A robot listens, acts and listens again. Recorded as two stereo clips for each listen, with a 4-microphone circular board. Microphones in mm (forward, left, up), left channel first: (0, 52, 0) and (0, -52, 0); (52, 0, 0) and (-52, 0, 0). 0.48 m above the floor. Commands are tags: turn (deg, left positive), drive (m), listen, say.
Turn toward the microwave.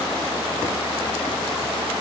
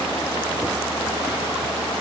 <listen/>
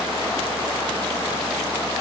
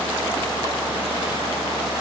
<listen/>
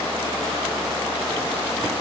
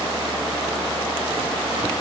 <say>I can't make out a microwave.</say>